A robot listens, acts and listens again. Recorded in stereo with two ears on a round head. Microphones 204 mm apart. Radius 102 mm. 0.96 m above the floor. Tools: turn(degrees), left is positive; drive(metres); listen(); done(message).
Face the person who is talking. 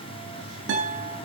listen()
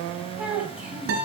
turn(degrees=-30)
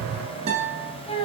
turn(degrees=25)
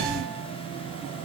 listen()
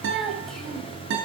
listen()
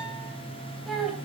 done("Facing the child speaking.")